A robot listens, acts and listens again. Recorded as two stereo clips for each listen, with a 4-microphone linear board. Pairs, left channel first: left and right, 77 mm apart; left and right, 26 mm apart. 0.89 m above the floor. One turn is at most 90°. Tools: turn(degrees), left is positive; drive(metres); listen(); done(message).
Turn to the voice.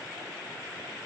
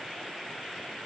listen()
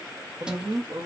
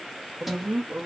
turn(degrees=-70)
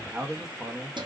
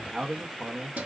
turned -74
turn(degrees=-15)
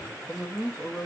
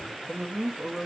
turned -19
done("Found it: a man speaking, straight ahead.")